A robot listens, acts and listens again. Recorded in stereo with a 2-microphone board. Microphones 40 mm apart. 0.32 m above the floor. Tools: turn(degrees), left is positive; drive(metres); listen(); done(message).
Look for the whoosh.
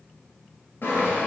listen()
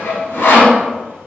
listen()
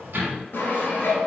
done("I can't make out a whoosh, only sawing and a sliding door.")